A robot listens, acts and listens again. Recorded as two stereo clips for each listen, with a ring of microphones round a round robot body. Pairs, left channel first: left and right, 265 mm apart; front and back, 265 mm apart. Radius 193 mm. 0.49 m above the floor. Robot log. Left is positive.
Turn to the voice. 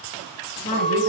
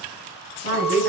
note: The woman speaking: 135° left.
cmd yaw +135
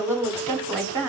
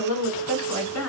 note: The woman speaking is now 10° right.
cmd yaw -10
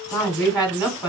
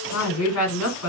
end: Found it: a woman speaking, straight ahead, 1 to 2 m away.